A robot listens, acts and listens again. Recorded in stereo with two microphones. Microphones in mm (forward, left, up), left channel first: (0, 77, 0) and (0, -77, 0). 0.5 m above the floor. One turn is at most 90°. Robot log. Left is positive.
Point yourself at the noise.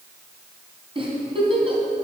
note: The giggle: about 35° right or 145° right.
cmd yaw -35
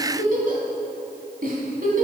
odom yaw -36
note: So it is at 110° right.
cmd yaw -90
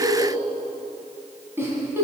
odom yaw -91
note: The giggle is now 15° right.
cmd yaw -15
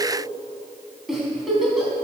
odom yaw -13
end: Found it: a giggle, straight ahead, 2 to 4 m away.